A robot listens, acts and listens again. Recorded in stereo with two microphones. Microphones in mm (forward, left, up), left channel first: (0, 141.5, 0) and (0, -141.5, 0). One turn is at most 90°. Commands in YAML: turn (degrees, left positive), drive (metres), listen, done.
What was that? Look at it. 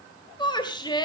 turn: 15
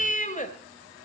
turn: 90
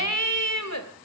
turn: 90
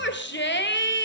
turn: 45
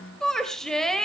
done: "Found it: a shout, straight ahead."